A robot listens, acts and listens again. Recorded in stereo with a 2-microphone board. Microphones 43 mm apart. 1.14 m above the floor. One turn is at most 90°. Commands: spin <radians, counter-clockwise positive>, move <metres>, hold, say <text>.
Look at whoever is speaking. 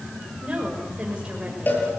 spin -0.44
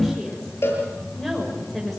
say Facing the woman speaking, over 4 m away.